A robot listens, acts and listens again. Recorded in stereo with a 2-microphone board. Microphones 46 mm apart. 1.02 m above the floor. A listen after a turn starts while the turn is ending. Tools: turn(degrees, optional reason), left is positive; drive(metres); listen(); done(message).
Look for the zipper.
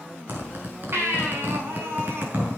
turn(degrees=-45, reason="The zipper: about 45° right or 135° right.")
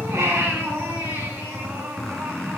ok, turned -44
done("Facing the zipper.")